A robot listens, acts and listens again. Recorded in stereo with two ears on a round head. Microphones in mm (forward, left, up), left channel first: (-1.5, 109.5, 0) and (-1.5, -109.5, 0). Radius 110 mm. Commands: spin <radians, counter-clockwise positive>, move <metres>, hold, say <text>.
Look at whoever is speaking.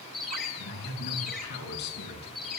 spin 0.79
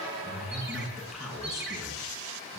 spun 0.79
say Found it: a man speaking, straight ahead.